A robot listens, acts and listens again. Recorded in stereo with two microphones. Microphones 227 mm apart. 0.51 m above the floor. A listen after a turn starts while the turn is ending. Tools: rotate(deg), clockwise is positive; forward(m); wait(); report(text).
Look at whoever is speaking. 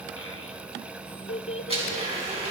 rotate(-60)
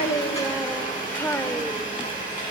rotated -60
rotate(-10)
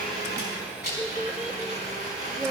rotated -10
report("Found it: a child speaking, straight ahead.")